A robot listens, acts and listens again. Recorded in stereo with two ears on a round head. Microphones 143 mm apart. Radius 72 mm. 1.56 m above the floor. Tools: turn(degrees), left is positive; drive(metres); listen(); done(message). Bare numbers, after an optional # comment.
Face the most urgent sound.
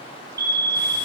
# The fire alarm: about 20° right or 160° right.
turn(-20)
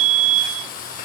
# So it is at 135° right.
turn(-135)
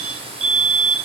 # The fire alarm is now 40° right.
turn(-40)
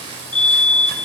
# The fire alarm is now 10° left.
turn(10)
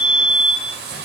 done("Facing the fire alarm.")